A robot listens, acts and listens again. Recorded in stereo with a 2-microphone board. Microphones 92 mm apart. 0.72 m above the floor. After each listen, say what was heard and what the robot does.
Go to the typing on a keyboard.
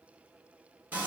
Keep listening.
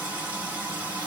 Keep listening.
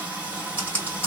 The typing on a keyboard: about 20° left or 160° left. Turn 20° left.
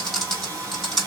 Drive 1.0 m forward.
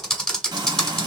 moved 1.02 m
Drive 1.0 m forward.
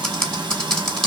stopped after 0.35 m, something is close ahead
The typing on a keyboard is now 10° left. Turn 10° left.
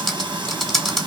I am next to the typing on a keyboard.